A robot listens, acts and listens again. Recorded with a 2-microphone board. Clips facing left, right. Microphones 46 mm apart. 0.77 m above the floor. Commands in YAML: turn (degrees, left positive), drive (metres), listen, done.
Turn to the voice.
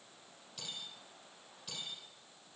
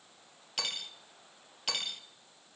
listen: true
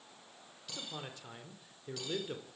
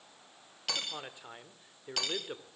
turn: -20
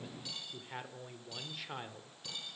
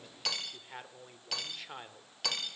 done: "Facing the man speaking, 2 to 4 m away."